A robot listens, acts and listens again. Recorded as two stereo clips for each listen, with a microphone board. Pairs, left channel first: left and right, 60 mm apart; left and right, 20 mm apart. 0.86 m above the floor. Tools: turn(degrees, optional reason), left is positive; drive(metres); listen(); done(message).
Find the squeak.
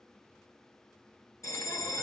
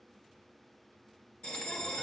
listen()
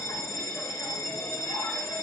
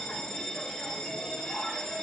listen()
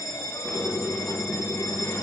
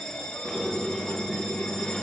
turn(degrees=75, reason="The squeak: about 75° left or 105° left.")
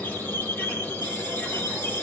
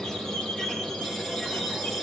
turn(degrees=25, reason="So it is at 25° left.")
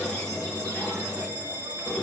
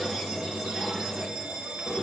turn(degrees=15, reason="The squeak is now 15° left.")
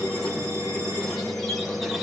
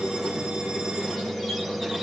done("Facing the squeak.")